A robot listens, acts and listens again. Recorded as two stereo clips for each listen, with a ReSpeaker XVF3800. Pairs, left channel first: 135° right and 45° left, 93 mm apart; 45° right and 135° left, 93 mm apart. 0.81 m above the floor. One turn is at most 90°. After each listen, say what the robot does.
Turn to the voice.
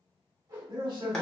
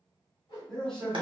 Turn 40° left.
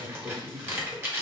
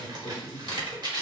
Facing the man speaking.